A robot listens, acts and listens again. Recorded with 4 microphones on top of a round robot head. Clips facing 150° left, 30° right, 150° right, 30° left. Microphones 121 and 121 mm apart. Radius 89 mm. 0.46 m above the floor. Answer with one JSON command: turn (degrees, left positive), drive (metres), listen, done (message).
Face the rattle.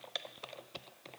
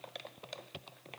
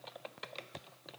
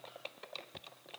{"listen": true}
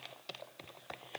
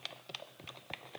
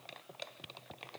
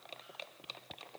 {"listen": true}
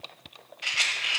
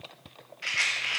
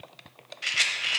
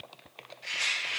{"turn": -140}
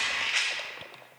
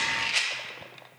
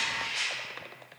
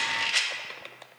{"turn": 30}
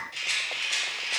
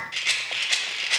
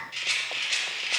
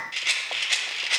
{"done": "Found it: a rattle, straight ahead."}